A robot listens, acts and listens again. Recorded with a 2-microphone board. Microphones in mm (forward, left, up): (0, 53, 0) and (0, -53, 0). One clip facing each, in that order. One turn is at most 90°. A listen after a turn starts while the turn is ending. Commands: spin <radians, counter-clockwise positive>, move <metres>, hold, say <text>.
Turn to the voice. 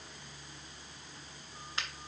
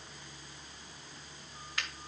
hold
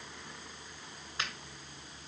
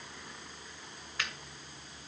hold
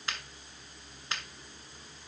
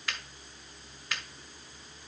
say I can't make out anyone speaking to turn to.